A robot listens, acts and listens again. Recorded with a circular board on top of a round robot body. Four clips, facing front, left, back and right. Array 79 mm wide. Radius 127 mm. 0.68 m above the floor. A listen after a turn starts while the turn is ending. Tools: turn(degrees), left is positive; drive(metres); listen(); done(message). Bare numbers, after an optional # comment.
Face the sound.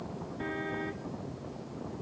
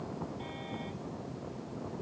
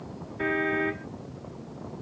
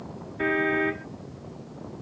# The car horn: 120° right.
turn(-120)
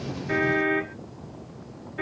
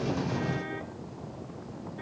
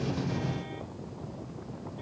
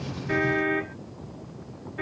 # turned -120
# The car horn is now 30° right.
turn(-30)
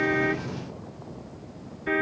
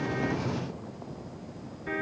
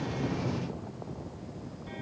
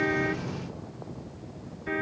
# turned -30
done("Found it: a car horn, straight ahead.")